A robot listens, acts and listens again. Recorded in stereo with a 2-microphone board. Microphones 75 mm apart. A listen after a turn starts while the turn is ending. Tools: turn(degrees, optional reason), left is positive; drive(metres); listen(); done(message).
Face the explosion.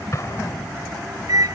turn(degrees=45, reason="The explosion: about 45° left or 135° left.")
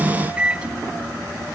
listen()
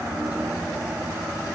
done("I heard an explosion, but can't make it out now. It was about straight ahead or 90° left.")